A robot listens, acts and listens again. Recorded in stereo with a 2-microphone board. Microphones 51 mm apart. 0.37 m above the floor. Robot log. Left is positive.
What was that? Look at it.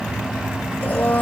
note: The blender: about 35° left or 145° left.
cmd yaw +35
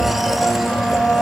end: Found it: a blender, straight ahead.